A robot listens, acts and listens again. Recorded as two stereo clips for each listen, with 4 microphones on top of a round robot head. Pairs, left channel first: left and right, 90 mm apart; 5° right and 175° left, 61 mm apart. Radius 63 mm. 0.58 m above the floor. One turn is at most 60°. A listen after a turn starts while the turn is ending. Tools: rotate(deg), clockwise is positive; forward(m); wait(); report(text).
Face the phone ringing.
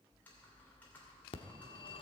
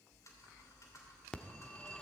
rotate(-60)
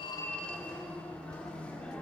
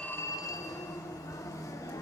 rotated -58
rotate(-15)
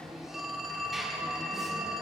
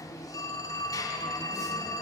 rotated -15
report("Found it: a phone ringing, straight ahead, under 1 m away.")